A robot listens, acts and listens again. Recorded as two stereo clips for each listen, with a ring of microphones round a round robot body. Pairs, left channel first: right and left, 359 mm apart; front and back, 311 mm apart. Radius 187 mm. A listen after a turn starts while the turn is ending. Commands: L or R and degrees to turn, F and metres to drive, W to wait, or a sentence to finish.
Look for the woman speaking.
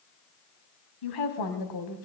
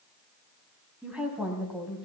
R95
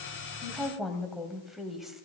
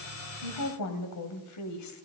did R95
Found it: a woman speaking, straight ahead, 2 to 4 m away.